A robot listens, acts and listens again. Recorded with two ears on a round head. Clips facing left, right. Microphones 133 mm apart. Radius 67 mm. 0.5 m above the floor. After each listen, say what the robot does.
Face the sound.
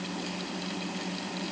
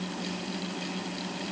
Keep listening.
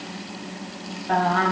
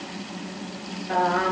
Turn 65° left.
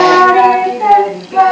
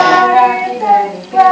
Turn 60° left.
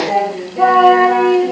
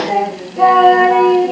Facing the singing, over 4 m away.